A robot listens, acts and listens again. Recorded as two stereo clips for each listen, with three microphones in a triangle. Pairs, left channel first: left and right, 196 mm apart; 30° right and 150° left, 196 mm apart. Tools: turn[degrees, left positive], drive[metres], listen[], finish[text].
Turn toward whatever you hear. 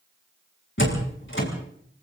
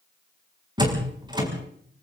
Thought: The door slam: 85° left.
Action: turn[85]
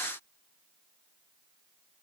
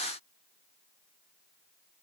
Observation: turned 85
Action: finish[Facing where the door slam came from. I can't hear it now.]